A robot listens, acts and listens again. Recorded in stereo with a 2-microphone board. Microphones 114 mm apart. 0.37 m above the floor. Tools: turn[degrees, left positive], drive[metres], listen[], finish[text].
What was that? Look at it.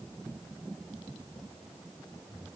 Action: listen[]
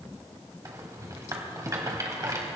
Thought: The rattle: about 30° right or 150° right.
Action: turn[-30]
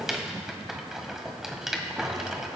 Action: finish[Found it: a rattle, straight ahead, 1 to 2 m away.]